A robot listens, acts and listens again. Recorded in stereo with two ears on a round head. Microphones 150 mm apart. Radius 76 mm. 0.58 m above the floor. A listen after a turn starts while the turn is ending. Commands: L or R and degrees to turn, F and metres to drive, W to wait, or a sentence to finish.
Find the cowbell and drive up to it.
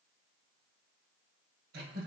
W
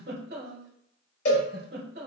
L60
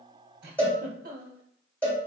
L10
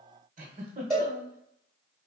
F1.0
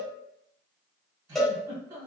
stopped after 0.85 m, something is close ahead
Arrived at the cowbell, straight ahead.